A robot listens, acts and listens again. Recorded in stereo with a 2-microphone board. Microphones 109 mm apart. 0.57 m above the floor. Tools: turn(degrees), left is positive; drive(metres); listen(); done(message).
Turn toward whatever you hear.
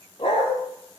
turn(degrees=50)
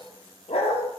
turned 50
turn(degrees=80)
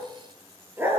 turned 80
turn(degrees=-20)
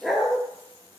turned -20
done("Facing the dog barking.")